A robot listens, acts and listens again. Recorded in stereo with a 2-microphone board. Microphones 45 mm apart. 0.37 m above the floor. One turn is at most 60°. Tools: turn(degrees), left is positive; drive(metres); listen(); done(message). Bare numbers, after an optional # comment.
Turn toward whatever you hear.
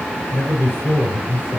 # The man speaking: about 65° left or 115° left.
turn(60)
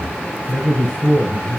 # So it is at 15° left.
turn(15)
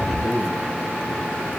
done("Facing the man speaking, over 4 m away.")